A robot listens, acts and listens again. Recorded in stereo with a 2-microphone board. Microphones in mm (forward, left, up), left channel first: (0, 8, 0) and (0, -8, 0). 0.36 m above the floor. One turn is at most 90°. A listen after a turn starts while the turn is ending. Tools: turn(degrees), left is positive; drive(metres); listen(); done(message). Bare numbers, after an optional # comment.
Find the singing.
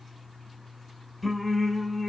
turn(30)
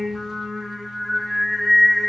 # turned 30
# So it is at 160° left.
turn(90)
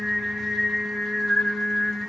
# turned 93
# The singing is now 70° left.
turn(70)
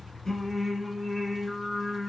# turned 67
done("Found it: singing, straight ahead.")